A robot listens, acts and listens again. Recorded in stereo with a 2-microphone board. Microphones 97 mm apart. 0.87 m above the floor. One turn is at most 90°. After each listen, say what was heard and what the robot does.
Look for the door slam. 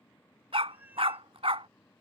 Keep listening.
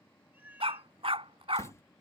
The door slam: about 30° left or 150° left. Turn 30° left.
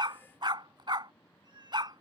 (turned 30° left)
Keep listening.
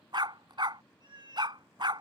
I heard a door slam, but can't make it out now. It was about straight ahead or 120° left.